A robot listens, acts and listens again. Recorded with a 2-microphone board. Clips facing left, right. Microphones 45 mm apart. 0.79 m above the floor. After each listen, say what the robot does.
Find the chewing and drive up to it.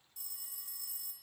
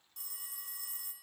Keep listening.
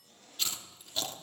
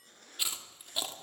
Turn 30° right.
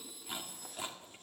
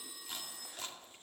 Turn 15° left.
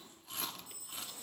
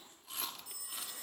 Drive 1.0 m forward.
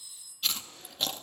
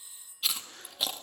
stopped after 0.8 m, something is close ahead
Arrived at the chewing, straight ahead.